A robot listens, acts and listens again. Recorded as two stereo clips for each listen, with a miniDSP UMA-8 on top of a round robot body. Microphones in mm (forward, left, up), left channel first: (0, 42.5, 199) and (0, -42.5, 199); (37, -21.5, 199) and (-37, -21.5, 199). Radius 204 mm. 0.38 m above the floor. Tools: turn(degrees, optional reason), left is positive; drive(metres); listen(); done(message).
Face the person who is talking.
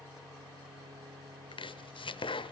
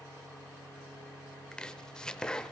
listen()
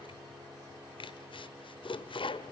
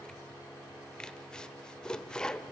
listen()
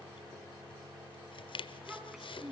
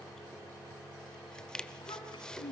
done("Facing the child speaking.")